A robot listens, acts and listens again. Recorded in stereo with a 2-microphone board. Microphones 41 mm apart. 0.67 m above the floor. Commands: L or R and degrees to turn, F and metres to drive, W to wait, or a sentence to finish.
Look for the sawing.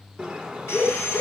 L90
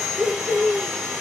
R15
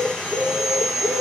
Facing the sawing.